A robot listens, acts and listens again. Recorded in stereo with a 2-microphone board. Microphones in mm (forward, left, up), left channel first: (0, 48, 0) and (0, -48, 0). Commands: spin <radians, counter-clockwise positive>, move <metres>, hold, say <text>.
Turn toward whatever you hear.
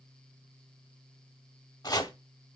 spin 0.70
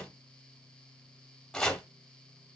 say Found it: chopping, straight ahead, under 1 m away.